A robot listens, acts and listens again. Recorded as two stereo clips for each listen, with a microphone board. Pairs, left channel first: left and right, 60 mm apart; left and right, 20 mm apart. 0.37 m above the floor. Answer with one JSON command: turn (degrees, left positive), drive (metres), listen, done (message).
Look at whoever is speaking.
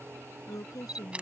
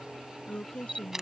{"turn": 90}
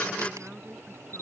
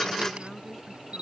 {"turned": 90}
{"turn": -10}
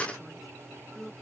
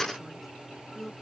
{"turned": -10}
{"done": "Facing the woman speaking."}